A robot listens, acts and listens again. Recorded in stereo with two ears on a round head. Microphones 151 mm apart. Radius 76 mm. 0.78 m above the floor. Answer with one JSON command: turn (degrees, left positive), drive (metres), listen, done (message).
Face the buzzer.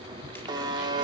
{"turn": -25}
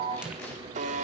{"turn": -130}
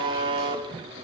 {"turn": -30}
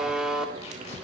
{"done": "Found it: a buzzer, straight ahead."}